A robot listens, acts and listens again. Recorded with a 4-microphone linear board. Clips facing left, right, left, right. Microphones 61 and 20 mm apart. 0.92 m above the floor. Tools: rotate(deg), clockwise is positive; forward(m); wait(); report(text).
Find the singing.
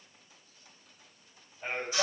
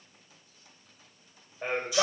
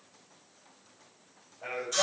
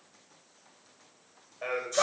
rotate(65)
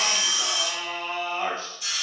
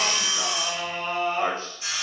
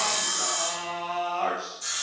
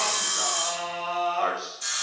rotate(45)
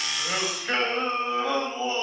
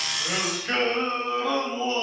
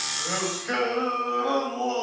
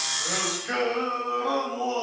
report("Facing the singing.")